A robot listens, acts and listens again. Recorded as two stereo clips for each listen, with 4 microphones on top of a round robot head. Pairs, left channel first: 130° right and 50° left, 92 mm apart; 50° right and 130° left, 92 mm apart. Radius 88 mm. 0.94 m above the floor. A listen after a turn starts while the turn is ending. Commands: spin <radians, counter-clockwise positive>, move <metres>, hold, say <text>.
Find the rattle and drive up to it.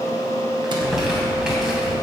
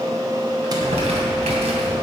hold
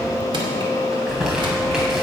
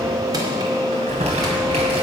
hold
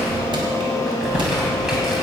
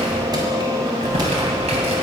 say I can't make out a rattle to turn to.